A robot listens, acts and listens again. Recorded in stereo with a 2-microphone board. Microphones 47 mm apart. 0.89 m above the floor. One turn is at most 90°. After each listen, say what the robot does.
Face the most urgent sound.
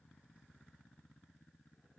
Keep listening.
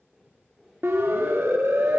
Turn 65° right.
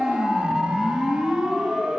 Turn 15° right.
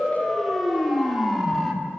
Facing the siren.